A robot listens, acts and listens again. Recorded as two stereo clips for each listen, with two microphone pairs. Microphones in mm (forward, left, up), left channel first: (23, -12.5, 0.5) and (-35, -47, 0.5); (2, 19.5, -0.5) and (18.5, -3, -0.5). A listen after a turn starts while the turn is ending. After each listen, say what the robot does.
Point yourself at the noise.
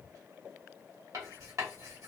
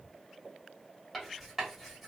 Turn 140° right.
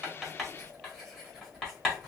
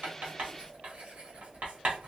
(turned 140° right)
Turn 55° right.
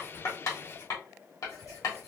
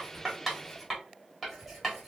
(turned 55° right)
Turn 25° left.
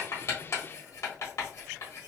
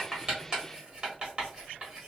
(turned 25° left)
Found it: writing, straight ahead, 1 to 2 m away.